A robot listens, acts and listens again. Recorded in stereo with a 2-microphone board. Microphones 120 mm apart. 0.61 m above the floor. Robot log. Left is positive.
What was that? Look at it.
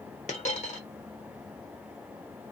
cmd yaw +90
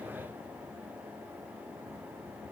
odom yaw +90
end: Facing where the dropped coin came from. I can't hear it now.